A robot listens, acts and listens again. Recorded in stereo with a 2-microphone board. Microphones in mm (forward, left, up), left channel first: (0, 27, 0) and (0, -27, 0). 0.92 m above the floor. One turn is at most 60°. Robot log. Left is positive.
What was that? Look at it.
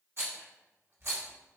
note: The rattle: about 50° right or 130° right.
cmd yaw -50
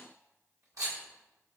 note: So it is at 80° right.
cmd yaw -60
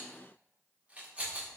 note: The rattle is now 25° right.
cmd yaw -25
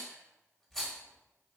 end: Facing the rattle.